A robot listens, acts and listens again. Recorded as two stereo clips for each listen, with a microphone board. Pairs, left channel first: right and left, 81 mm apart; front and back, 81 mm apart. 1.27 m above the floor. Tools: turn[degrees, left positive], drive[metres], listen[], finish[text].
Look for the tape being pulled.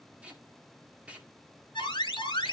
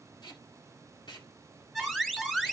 Thought: The tape being pulled: 15° left.
Action: turn[15]
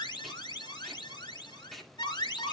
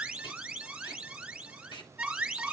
Action: finish[Facing the tape being pulled, 2 to 4 m away.]